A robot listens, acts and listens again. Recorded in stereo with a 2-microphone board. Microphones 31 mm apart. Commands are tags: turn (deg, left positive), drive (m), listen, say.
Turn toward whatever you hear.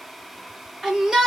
<turn deg="-30"/>
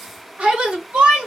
<turn deg="-140"/>
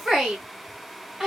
<turn deg="-15"/>
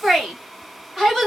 <say>Found it: a shout, straight ahead, 2 to 4 m away.</say>